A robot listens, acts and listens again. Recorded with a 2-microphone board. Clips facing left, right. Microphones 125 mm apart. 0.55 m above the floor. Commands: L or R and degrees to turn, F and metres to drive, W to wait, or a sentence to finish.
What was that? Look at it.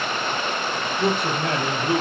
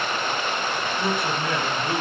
L60
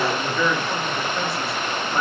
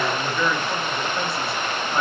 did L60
Found it: a man speaking, straight ahead.